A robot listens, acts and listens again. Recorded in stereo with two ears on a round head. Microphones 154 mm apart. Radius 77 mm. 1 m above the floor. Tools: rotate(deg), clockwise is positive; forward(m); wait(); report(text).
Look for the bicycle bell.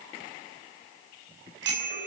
rotate(75)
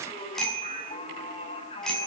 report("Found it: a bicycle bell, straight ahead, over 4 m away.")